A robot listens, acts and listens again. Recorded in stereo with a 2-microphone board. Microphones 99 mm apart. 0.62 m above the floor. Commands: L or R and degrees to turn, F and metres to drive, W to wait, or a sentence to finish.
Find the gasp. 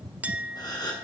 L45
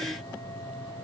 W
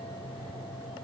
I heard a gasp, but can't make it out now. It was about straight ahead or 90° left.